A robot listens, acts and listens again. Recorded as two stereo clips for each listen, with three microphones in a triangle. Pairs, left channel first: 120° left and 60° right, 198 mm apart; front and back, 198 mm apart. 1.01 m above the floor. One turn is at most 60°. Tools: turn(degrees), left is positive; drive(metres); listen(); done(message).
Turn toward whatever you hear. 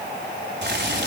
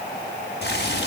turn(degrees=-35)
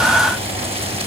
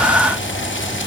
done("Found it: boiling, straight ahead, over 4 m away.")